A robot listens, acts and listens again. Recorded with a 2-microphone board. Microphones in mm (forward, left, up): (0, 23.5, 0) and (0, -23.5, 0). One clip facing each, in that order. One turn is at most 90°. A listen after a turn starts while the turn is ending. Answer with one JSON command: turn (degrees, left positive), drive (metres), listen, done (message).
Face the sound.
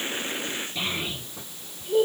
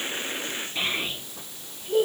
{"turn": -35}
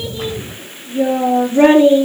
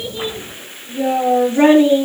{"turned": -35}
{"done": "Facing the child speaking."}